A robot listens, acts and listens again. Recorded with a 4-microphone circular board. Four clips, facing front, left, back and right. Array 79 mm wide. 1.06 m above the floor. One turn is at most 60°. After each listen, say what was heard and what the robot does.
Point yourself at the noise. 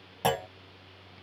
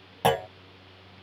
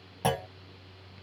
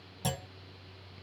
The clunk: 80° left. Turn 60° left.
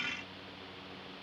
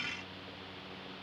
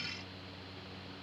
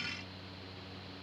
Nothing new. It was at 20° left. Turn 20° left.
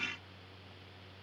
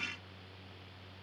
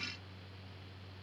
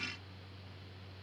I heard a clunk from this way, but can't make it out now.